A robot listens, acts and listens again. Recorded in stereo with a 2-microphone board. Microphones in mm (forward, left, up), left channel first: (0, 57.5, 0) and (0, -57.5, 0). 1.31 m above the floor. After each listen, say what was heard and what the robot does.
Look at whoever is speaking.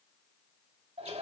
Keep listening.
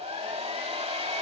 Keep listening.
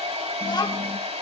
The child speaking: about 40° left or 140° left. Turn 40° left.
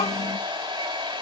So it is at 100° left. Turn 100° left.
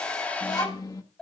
The child speaking is now 35° left. Turn 35° left.
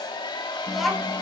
Found it: a child speaking, straight ahead.